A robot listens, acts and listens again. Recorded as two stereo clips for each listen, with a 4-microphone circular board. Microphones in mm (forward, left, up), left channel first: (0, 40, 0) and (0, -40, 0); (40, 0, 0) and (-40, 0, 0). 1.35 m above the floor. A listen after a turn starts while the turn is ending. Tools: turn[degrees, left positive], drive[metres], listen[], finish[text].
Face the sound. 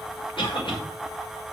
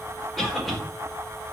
Thought: The cough: 85° left.
Action: turn[85]
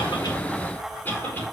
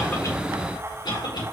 Thought: The cough is now 20° left.
Action: turn[20]
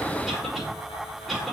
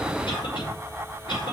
Action: finish[Found it: a cough, straight ahead, over 4 m away.]